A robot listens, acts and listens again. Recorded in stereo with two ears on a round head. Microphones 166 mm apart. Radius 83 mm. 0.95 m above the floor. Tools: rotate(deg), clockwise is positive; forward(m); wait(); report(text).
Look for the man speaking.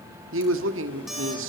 rotate(90)
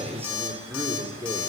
rotate(15)
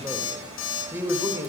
rotate(15)
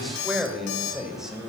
report("Found it: a man speaking, straight ahead.")